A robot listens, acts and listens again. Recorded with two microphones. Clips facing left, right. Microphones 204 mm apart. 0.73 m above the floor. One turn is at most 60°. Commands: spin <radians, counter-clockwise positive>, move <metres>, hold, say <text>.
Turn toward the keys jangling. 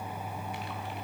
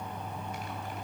hold
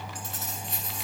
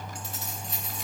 spin 0.96
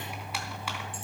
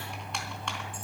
hold
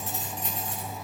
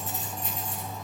spin 1.05
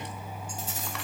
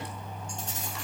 say Facing the keys jangling, over 4 m away.